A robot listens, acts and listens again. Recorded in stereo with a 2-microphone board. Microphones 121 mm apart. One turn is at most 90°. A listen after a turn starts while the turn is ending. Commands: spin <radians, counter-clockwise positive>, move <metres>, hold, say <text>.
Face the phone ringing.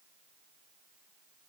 hold
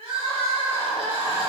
hold
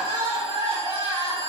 say I can't make out a phone ringing to turn to.